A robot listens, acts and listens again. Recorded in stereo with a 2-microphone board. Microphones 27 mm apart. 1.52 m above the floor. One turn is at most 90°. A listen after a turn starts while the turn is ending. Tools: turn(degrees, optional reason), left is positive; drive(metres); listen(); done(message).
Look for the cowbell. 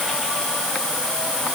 listen()
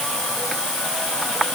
listen()
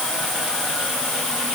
done("I can't make out a cowbell.")